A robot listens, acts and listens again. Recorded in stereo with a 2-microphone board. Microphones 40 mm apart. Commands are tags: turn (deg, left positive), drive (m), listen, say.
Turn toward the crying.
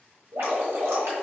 <listen/>
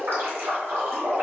<listen/>
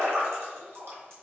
<say>I can't make out crying, only dripping.</say>